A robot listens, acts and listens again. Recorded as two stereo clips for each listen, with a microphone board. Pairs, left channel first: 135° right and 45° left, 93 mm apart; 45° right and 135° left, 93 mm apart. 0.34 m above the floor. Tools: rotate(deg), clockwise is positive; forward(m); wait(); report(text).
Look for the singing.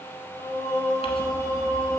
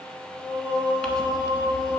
rotate(-105)
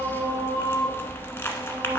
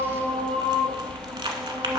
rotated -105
rotate(-25)
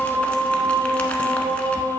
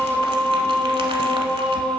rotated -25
report("Facing the singing, over 4 m away.")